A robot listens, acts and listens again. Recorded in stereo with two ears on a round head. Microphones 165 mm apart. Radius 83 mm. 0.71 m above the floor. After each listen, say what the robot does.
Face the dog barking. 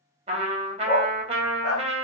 Turn 55° left.
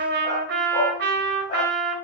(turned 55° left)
Keep listening.
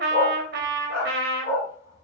Turn 65° left.
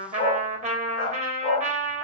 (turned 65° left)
Turn 35° left.
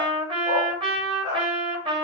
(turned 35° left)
Turn 20° left.
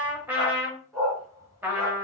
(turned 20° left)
Found it: a dog barking, straight ahead.